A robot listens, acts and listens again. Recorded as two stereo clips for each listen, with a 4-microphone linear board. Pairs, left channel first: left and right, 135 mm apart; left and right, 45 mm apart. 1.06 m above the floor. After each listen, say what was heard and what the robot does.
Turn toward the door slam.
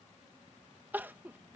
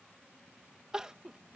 Keep listening.
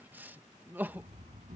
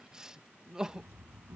The door slam: about 70° right or 110° right. Turn 70° right.
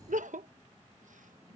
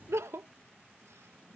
Keep listening.
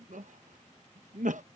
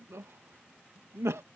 I heard a door slam, but can't make it out now. It was about straight ahead or 40° right.